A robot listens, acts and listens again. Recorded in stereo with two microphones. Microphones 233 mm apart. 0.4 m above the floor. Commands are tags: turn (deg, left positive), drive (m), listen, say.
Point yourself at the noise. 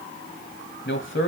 <turn deg="60"/>
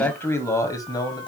<turn deg="20"/>
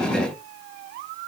<listen/>
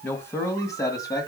<turn deg="15"/>
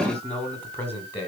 <turn deg="10"/>
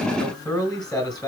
<say>Found it: a man speaking, straight ahead.</say>